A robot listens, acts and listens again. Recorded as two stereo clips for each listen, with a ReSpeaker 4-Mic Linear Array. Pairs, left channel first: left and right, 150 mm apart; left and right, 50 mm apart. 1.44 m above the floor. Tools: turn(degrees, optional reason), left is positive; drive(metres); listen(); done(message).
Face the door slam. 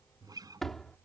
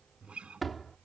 turn(degrees=30)
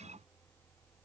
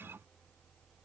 listen()
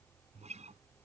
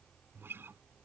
done("I heard a door slam, but can't make it out now. It was about 30° right or 150° left.")